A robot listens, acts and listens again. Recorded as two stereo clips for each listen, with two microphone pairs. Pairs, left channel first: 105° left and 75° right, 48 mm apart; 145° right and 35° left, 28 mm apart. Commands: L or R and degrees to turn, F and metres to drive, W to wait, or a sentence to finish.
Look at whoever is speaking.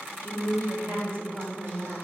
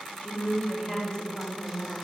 R95
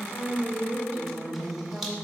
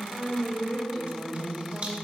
R25
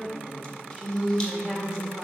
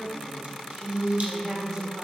Facing the woman speaking.